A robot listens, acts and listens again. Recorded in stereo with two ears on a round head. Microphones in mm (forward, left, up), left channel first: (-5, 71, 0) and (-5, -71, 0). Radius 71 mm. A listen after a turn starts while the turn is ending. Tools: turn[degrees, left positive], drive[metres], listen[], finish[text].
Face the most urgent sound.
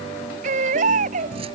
Thought: The baby crying: about 50° right or 130° right.
Action: turn[-50]
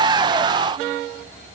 Action: listen[]
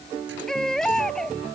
Action: finish[Found it: a baby crying, straight ahead.]